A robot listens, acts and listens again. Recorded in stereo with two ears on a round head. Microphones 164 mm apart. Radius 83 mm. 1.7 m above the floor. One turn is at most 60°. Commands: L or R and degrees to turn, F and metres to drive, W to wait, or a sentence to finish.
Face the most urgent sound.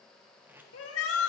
L60
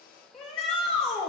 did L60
Facing the shout, 2 to 4 m away.